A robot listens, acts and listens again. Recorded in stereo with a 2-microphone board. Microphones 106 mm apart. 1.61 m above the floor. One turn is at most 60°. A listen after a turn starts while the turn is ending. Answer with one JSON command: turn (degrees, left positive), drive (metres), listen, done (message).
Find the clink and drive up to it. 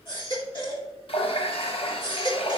{"listen": true}
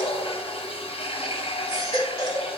{"listen": true}
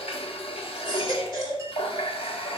{"done": "I can't make out a clink, only a running tap and a baby crying."}